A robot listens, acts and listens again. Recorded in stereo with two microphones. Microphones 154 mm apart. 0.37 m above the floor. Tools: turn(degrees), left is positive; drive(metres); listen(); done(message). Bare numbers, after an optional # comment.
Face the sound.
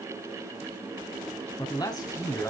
# The man speaking: about 20° left or 160° left.
turn(20)
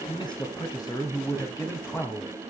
turn(30)
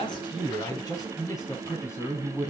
# The man speaking: about 20° left or 160° left.
turn(20)
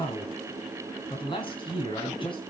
# The man speaking: about 35° left or 145° left.
turn(35)
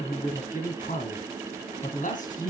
# So it is at 115° left.
turn(115)
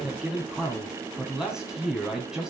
done("Facing the man speaking.")